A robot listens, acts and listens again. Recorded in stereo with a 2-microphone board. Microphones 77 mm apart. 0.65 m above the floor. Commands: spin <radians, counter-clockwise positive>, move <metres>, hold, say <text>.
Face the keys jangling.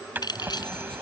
spin 1.13
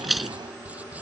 say Facing the keys jangling.